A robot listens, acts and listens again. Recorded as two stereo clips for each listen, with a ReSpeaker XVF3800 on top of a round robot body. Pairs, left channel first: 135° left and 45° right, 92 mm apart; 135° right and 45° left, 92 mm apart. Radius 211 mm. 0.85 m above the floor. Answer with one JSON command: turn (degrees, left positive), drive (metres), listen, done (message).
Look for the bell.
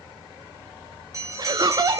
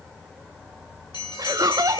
{"turn": -100}
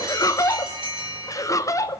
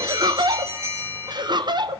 {"turn": -15}
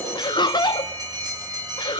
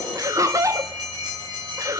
{"done": "Found it: a bell, straight ahead, over 4 m away."}